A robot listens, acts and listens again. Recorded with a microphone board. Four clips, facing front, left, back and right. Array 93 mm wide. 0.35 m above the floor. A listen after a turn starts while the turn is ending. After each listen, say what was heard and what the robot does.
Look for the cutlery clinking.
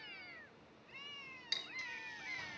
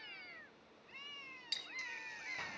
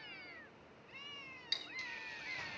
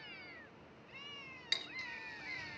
The cutlery clinking: 85° right. Turn 85° right.
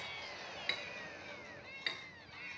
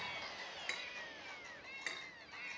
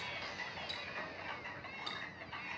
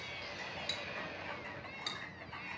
The cutlery clinking is now 30° left. Turn 30° left.
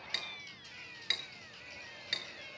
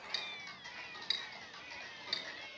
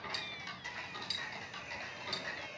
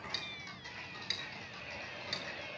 Facing the cutlery clinking, 2 to 4 m away.